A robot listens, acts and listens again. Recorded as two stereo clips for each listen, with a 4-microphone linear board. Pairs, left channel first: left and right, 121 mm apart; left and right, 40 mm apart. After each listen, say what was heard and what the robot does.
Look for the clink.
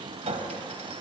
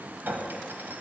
The clink: about 65° right or 115° right. Turn 65° right.
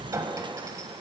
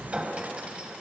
So it is at 30° right. Turn 30° right.
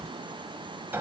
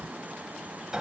The clink is now 20° right. Turn 20° right.
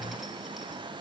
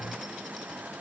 Keep listening.
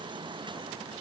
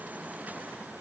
Keep listening.
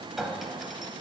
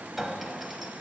Facing the clink, 1 to 2 m away.